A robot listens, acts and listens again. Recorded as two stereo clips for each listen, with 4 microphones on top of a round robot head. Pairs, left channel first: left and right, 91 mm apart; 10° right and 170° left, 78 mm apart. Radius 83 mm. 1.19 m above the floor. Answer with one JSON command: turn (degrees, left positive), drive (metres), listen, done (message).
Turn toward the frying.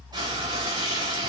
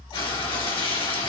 {"turn": -40}
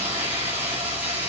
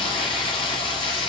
{"turn": -15}
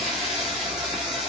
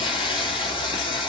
{"done": "Facing the frying."}